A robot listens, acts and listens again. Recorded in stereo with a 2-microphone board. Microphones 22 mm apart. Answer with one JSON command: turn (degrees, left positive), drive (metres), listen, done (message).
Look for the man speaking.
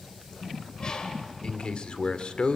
{"turn": 50}
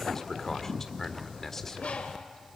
{"turn": 15}
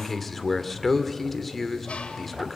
{"done": "Facing the man speaking."}